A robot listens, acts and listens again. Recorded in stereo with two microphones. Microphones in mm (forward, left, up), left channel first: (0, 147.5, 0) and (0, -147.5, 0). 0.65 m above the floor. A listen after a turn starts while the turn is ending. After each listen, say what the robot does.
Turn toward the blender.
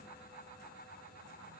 Keep listening.
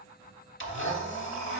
Turn 45° left.
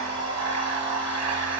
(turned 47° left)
Turn 75° left.
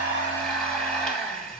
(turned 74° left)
Found it: a blender, straight ahead, under 1 m away.